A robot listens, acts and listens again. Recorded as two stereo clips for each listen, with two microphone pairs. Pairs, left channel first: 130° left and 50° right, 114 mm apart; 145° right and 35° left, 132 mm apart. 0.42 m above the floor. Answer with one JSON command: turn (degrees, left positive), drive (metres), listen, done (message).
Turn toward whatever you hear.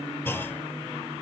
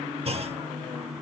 {"turn": 60}
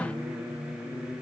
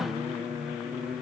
{"done": "I heard a clunk from this way, but can't make it out now."}